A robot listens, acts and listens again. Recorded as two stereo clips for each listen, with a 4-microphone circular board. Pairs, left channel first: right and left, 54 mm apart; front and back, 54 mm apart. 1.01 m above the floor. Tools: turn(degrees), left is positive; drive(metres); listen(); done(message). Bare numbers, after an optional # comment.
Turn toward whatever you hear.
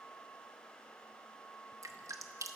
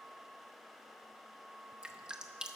# The dripping: 105° left.
turn(105)
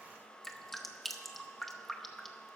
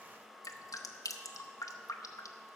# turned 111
done("Found it: dripping, straight ahead, under 1 m away.")